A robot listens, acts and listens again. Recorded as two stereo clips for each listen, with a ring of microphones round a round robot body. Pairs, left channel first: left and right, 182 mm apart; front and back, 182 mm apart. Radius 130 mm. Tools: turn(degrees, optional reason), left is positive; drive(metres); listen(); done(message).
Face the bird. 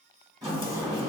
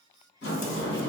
listen()
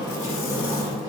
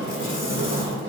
listen()
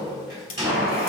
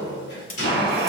turn(degrees=180, reason="The bird: straight behind.")
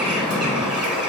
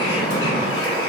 done("Facing the bird.")